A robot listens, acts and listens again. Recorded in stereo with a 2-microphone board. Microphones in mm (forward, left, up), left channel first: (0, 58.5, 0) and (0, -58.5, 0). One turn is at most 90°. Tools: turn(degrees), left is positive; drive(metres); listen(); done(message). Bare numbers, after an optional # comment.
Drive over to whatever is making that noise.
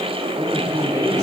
# The man speaking: about 30° right or 150° right.
turn(-30)
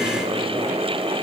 listen()
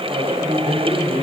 # So it is at 125° right.
turn(-90)
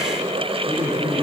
# The man speaking is now 45° right.
turn(-45)
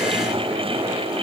listen()
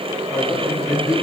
drive(1.0)
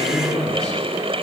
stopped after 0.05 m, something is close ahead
done("Blocked. The man speaking is further on, straight ahead.")